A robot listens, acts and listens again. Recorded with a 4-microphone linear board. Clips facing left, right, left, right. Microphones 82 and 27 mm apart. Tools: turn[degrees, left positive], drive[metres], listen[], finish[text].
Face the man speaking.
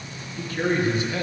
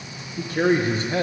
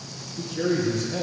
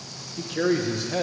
Thought: The man speaking: about 35° right or 145° right.
Action: turn[-35]
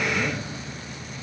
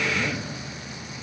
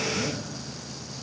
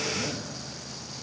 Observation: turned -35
Action: finish[Facing the man speaking.]